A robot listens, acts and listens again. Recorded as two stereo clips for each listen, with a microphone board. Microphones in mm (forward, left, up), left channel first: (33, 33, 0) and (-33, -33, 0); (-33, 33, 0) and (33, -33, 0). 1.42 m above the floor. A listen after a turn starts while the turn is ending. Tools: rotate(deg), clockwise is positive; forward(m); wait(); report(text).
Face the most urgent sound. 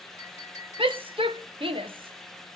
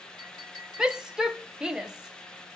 rotate(125)
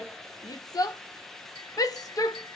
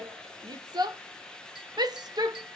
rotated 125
report("Facing the shout, under 1 m away.")